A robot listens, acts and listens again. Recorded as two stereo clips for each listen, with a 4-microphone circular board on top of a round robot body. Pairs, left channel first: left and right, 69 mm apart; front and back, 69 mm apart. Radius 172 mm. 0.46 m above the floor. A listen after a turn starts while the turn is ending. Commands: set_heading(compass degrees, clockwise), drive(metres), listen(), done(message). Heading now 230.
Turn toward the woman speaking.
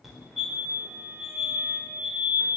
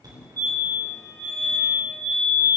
listen()
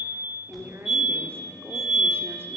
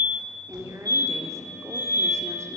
set_heading(10)
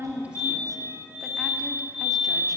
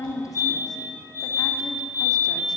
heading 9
listen()
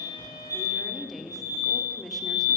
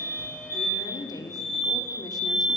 done("Facing the woman speaking.")